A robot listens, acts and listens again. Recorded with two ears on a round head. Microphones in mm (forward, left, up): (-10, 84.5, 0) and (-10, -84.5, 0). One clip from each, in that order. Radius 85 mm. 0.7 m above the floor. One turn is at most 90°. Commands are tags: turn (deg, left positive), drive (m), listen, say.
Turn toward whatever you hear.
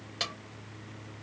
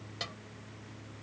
<turn deg="40"/>
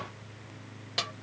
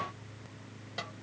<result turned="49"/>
<turn deg="90"/>
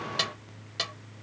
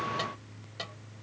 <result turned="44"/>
<turn deg="45"/>
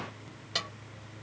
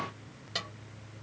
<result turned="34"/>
<turn deg="10"/>
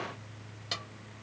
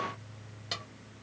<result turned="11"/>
<listen/>
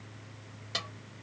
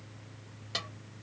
<say>Facing the snare drum.</say>